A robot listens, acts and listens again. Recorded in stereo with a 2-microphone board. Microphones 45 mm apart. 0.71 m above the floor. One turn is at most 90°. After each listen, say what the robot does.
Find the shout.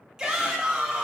Turn 30° right.
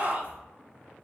Turn 90° right.
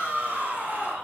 Turn 45° right.
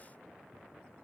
Keep listening.
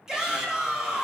Turn 15° right.
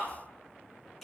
Found it: a shout, straight ahead, 1 to 2 m away.